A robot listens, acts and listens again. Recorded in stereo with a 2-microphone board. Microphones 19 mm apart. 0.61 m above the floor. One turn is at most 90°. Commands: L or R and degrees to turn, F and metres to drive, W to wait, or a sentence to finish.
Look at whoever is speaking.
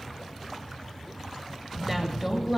R30
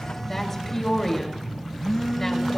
L20
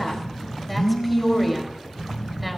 Found it: a woman speaking, straight ahead.